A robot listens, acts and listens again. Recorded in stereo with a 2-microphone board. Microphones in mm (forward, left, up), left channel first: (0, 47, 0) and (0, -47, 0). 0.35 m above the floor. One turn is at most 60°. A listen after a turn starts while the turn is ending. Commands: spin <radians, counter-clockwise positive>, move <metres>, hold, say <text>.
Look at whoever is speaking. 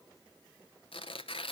hold
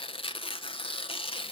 hold
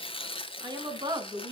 spin -1.05
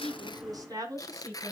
spin -0.61
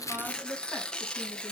hold
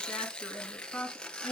say Found it: a woman speaking, straight ahead, 2 to 4 m away.